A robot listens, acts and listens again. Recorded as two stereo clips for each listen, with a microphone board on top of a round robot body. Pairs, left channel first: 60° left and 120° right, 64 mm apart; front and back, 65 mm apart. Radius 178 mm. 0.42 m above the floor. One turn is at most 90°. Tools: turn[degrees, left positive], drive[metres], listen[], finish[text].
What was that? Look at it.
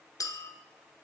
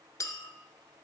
Thought: The clink: 35° left.
Action: turn[35]
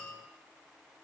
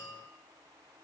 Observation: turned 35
Thought: The clink is now 15° right.
Action: turn[-15]
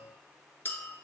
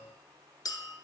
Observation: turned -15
Action: finish[Found it: a clink, straight ahead, under 1 m away.]